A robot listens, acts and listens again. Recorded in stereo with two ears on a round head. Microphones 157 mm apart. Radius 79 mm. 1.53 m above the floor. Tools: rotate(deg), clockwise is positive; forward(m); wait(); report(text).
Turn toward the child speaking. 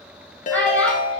rotate(-30)
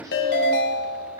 rotate(25)
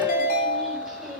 wait()
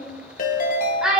report("Facing the child speaking.")